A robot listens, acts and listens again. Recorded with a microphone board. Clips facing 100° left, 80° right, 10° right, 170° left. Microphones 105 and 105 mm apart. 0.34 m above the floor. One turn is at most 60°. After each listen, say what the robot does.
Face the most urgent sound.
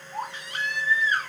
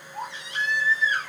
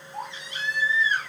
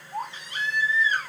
Turn 60° left.
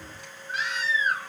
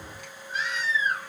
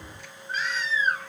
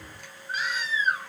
Turn 60° left.
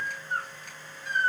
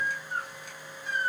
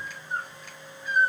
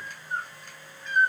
Turn 60° left.
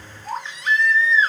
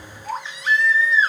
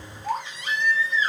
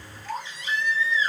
Facing the baby crying, 1 to 2 m away.